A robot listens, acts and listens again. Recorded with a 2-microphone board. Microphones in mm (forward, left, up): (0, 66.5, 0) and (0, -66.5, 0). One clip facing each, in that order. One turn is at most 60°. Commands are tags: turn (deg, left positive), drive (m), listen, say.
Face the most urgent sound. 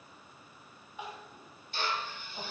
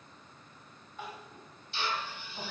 <turn deg="15"/>
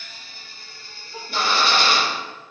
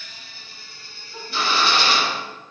<turn deg="60"/>
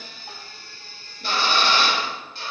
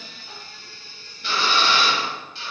<turn deg="60"/>
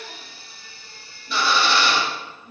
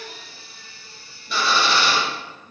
<turn deg="35"/>
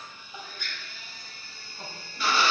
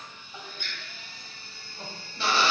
<say>Facing the crying, 1 to 2 m away.</say>